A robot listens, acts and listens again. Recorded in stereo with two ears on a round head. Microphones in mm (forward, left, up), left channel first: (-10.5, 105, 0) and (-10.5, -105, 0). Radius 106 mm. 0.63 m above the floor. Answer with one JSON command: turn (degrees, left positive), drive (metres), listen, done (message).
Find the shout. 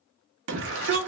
{"turn": -55}
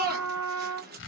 {"turn": -50}
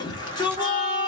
{"turn": 20}
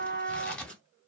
{"listen": true}
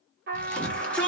{"done": "Found it: a shout, straight ahead."}